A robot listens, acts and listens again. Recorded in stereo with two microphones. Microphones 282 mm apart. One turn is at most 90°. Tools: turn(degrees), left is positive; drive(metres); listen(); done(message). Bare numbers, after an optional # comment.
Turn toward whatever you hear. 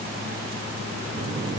listen()
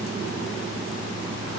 listen()
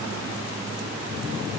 done("I can't make out anything to turn to.")